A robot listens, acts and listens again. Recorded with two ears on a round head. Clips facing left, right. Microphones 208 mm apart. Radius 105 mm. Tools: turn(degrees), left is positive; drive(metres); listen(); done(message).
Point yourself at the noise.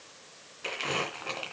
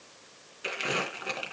turn(degrees=-30)
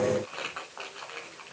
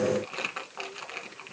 turn(degrees=-135)
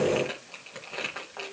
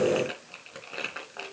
turn(degrees=-10)
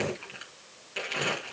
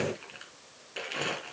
done("Found it: crumpling, straight ahead, 2 to 4 m away.")